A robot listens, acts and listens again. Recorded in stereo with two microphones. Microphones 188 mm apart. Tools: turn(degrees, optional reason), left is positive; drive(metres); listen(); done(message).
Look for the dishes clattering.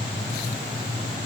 listen()
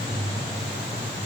listen()
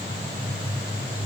done("I can't make out dishes clattering to turn to.")